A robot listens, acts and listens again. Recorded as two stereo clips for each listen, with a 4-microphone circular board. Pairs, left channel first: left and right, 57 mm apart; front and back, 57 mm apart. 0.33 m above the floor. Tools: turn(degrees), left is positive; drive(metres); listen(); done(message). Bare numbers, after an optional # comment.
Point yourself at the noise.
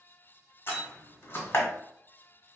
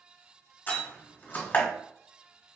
# The door slam: 50° left.
turn(50)
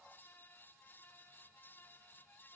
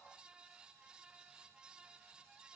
done("Facing where the door slam came from. I can't hear it now.")